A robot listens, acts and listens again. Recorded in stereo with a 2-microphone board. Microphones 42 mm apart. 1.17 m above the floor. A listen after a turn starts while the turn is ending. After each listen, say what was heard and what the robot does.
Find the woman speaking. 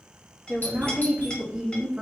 Turn 30° right.
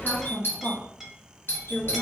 So it is at 45° left. Turn 45° left.
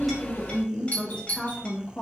The woman speaking is now 35° left. Turn 35° left.
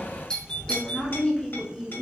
The woman speaking is now 20° left. Turn 20° left.
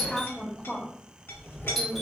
The woman speaking is now 10° left. Turn 10° left.
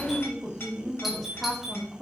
Facing the woman speaking, 1 to 2 m away.